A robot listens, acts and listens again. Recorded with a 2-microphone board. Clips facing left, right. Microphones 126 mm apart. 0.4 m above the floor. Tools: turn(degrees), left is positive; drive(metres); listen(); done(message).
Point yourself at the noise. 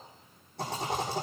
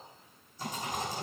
turn(degrees=75)
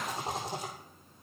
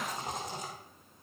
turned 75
turn(degrees=30)
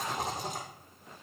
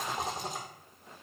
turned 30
done("Facing the rattle.")